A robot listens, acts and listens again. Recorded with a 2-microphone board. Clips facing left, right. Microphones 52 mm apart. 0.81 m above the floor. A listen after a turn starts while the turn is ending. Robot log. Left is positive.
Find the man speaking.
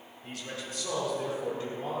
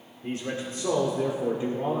note: The man speaking: about 15° right or 165° right.
cmd yaw -15
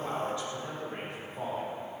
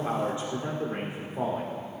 cmd yaw -30
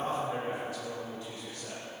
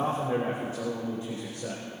note: The man speaking: about 25° right or 155° right.
cmd yaw -25
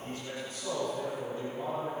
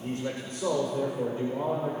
note: So it is at 140° right.
cmd yaw -140
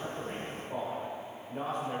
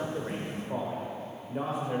note: The man speaking is now 10° right.
cmd yaw -10
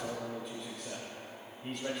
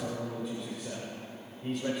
end: Found it: a man speaking, straight ahead, 2 to 4 m away.